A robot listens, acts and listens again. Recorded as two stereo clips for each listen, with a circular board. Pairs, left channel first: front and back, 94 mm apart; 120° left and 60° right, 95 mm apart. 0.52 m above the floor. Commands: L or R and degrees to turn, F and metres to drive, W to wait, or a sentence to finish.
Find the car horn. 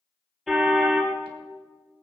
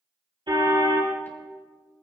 R90
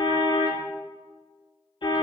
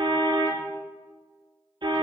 R30
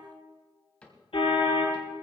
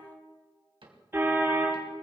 Facing the car horn.